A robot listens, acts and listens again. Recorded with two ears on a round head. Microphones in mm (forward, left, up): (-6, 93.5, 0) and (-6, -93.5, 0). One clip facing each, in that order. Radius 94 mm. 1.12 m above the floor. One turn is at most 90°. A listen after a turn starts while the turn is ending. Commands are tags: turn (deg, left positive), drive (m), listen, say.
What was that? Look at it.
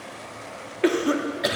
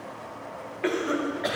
<turn deg="50"/>
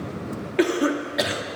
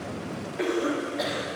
<turn deg="80"/>
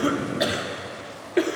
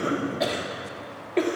<turn deg="10"/>
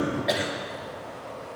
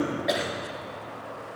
<say>Facing the cough, 1 to 2 m away.</say>